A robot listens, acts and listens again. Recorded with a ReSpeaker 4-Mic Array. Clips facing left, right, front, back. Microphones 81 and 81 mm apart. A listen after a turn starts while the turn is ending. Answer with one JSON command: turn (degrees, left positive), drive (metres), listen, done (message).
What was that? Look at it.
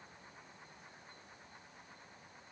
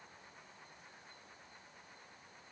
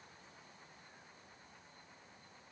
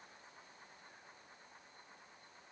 {"listen": true}
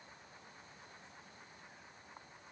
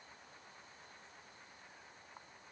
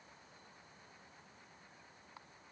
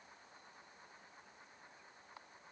{"listen": true}
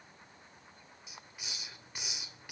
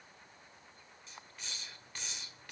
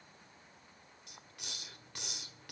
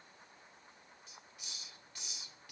{"turn": 10}
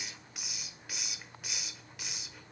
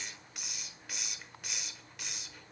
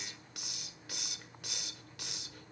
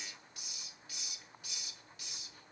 {"done": "Found it: a hiss, straight ahead, 1 to 2 m away."}